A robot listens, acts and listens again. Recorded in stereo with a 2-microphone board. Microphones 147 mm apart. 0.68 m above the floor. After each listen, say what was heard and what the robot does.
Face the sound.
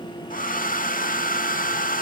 The hair dryer: about 70° left or 110° left. Turn 70° left.
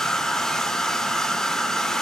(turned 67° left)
Facing the hair dryer.